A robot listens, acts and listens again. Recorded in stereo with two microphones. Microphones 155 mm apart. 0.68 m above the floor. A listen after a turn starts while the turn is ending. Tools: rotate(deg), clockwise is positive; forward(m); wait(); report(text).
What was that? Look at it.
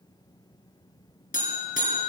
rotate(-60)
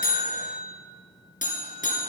rotate(-60)
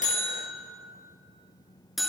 report("Found it: a buzzer, straight ahead, 2 to 4 m away.")